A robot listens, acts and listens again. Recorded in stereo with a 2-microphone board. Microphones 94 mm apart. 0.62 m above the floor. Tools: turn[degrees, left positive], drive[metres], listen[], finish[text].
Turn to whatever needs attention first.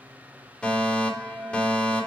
Action: turn[30]
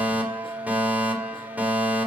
Thought: So it is at 20° right.
Action: turn[-20]
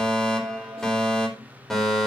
Action: finish[Facing the fire alarm, 2 to 4 m away.]